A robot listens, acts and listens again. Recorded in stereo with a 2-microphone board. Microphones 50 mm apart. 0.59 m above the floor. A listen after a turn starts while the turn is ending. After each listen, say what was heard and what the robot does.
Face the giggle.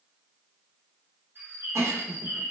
The giggle: about 70° right or 110° right. Turn 70° right.
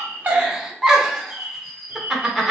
So it is at 10° right. Turn 10° right.
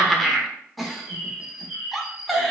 Facing the giggle.